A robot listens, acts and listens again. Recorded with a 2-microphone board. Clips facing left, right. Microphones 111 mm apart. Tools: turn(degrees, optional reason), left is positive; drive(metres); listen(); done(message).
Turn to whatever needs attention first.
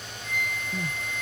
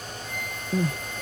turn(degrees=-60, reason="The crying: about 60° right or 120° right.")
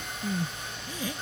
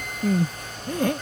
turn(degrees=-55, reason="So it is at 55° right.")
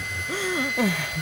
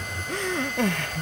done("Found it: crying, straight ahead.")